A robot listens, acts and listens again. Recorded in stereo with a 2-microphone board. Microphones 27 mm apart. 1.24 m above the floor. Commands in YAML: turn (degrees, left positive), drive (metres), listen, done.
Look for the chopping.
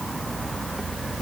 listen: true
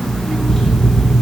listen: true
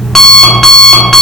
done: "I can't make out chopping to turn to."